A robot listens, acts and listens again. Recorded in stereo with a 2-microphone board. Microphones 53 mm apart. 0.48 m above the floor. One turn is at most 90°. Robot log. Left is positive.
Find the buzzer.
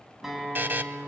note: The buzzer: about 40° right or 140° right.
cmd yaw -40
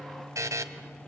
note: So it is at 100° right.
cmd yaw -90
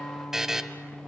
note: The buzzer is now 10° right.
cmd yaw -10
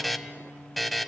end: Found it: a buzzer, straight ahead, 1 to 2 m away.